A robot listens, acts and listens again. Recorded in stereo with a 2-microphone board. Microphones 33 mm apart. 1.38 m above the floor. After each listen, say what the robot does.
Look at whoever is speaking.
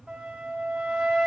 Keep listening.
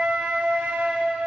Keep listening.
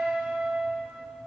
I can't make out anyone speaking, only a flute.